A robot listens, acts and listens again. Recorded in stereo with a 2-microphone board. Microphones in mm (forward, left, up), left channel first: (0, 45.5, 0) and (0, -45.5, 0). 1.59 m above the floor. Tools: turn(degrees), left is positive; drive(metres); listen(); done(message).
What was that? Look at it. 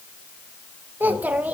turn(degrees=-15)
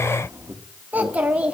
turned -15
turn(degrees=-30)
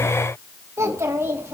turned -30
turn(degrees=-25)
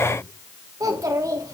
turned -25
turn(degrees=-140)
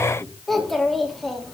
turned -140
done("Found it: a child speaking, straight ahead.")